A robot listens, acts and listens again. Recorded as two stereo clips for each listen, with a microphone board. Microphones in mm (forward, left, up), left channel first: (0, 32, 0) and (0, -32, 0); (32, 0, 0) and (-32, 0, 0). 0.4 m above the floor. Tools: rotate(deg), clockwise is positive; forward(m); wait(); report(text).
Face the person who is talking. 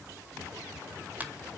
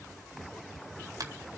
wait()
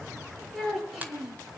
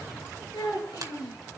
report("Found it: a child speaking, straight ahead.")